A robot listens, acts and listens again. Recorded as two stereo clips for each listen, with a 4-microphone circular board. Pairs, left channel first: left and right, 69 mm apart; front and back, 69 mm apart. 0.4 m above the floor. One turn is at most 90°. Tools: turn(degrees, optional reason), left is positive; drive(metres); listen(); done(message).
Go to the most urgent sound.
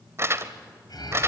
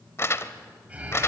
turn(degrees=90, reason="The alarm: 105° left.")
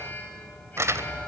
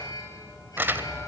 turn(degrees=25, reason="The alarm is now 25° left.")
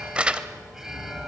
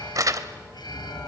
drive(metres=1.0)
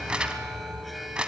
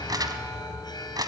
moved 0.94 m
drive(metres=1.0)
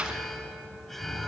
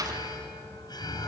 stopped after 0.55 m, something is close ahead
done("Blocked. The alarm is further on, straight ahead.")